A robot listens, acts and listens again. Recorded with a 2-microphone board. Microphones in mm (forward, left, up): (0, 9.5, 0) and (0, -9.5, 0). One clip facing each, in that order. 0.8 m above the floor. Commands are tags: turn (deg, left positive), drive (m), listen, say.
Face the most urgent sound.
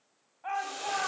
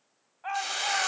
<turn deg="-20"/>
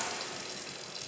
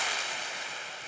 <listen/>
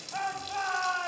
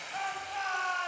<say>Facing the shout.</say>